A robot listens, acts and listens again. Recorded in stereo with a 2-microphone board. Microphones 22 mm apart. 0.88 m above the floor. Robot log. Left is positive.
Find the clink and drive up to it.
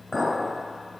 cmd yaw +30
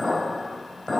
note: So it is at 150° left.
cmd yaw +150
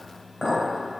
note: The clink is now 20° left.
cmd yaw +20
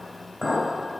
cmd fwd 1.0
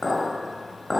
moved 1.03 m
note: The clink is now 10° left.
cmd yaw +10
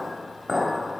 cmd fwd 1.0
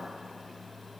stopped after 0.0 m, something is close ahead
end: Arrived at the clink, straight ahead.